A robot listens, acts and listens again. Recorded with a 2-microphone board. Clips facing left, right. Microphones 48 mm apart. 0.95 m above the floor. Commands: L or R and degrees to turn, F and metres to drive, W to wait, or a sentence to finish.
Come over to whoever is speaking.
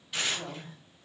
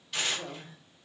L45
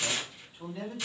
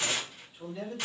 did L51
F1.0
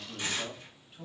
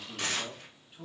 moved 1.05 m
F1.0
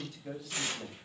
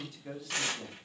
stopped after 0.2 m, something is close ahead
I am next to the man speaking.